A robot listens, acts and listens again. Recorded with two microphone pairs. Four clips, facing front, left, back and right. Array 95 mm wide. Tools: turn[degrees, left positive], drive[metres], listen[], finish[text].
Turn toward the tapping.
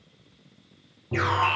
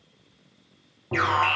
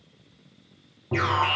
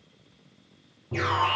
Thought: The tapping: 125° left.
Action: turn[125]
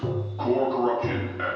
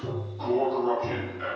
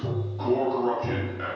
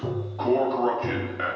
Thought: The tapping is now 30° right.
Action: turn[-30]
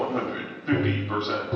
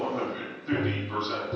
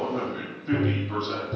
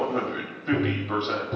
Thought: The tapping is now 20° right.
Action: turn[-20]
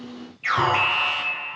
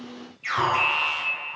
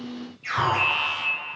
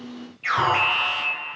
Action: listen[]
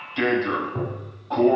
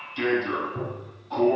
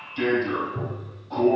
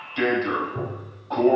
Action: finish[Facing the tapping, 2 to 4 m away.]